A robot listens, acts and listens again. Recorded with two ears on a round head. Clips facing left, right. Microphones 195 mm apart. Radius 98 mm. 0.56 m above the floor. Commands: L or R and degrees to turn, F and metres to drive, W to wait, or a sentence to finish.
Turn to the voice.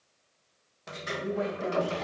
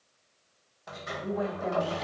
L30
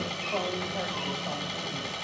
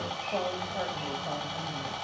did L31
W
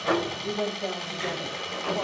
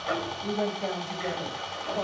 Found it: a woman speaking, straight ahead.